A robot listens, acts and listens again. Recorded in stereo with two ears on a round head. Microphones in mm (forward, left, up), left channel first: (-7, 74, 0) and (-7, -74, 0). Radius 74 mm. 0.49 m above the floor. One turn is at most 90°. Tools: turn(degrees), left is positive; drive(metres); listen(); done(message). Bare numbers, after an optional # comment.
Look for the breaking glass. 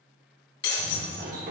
# The breaking glass: about 70° left or 110° left.
turn(70)
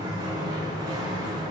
listen()
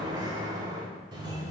done("I heard breaking glass, but can't make it out now. It was about straight ahead or 40° left.")